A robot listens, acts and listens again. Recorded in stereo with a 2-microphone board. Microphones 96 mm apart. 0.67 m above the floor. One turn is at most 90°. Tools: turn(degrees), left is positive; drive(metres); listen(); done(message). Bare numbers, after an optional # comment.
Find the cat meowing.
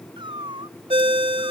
# The cat meowing: about 55° right or 125° right.
turn(-55)
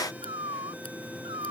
# So it is at 60° right.
turn(-60)
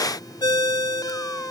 listen()
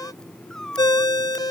done("Facing the cat meowing.")